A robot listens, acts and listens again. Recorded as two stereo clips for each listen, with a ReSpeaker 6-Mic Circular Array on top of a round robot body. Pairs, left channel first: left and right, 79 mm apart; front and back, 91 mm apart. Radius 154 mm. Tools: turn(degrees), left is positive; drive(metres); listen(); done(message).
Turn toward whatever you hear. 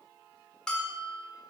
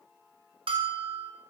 turn(degrees=170)
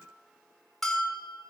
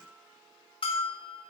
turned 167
done("Facing the bell, under 1 m away.")